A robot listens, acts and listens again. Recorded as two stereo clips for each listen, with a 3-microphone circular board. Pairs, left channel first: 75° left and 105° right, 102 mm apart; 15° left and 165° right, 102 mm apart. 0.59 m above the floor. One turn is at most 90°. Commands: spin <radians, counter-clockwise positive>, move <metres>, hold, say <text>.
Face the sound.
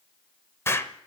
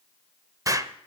spin 1.57
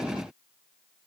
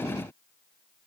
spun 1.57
spin 0.87
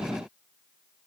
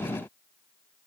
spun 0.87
say Facing where the explosion came from. I can't hear it now.